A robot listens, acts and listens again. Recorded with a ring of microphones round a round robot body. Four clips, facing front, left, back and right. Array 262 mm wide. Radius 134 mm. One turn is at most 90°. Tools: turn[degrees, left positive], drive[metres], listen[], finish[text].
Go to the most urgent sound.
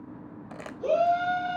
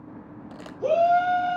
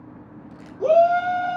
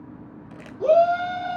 Thought: The shout: 155° right.
Action: turn[-90]
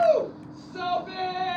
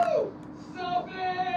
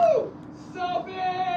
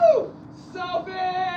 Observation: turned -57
Thought: The shout is now 100° right.
Action: turn[-90]
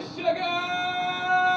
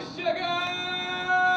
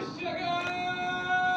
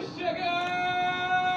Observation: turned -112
Thought: The shout is now 15° left.
Action: turn[15]
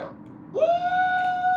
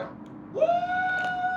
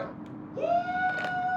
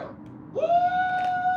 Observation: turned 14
Action: drive[1.0]
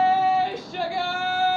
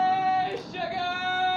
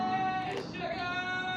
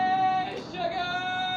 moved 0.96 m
Action: drive[1.0]
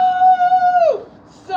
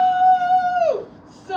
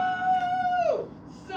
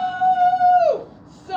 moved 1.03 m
Action: drive[1.0]
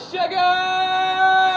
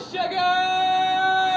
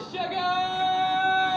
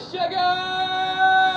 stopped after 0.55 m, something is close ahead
Thought: The shout is now 10° right.
Action: turn[-10]
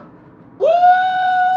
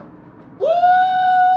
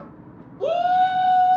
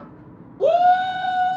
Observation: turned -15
Action: finish[I am next to the shout.]